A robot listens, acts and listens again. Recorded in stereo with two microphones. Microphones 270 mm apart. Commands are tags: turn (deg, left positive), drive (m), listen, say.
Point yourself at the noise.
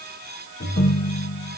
<turn deg="70"/>
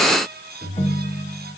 <turn deg="30"/>
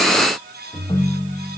<turn deg="20"/>
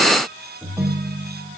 <say>Facing the ringtone, 1 to 2 m away.</say>